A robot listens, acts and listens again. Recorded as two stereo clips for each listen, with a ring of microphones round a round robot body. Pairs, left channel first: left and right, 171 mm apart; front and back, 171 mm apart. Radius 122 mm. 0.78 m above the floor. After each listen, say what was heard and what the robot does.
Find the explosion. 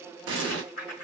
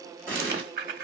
The explosion: 100° right. Turn 100° right.
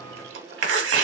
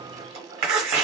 Facing where the explosion came from. I can't hear it now.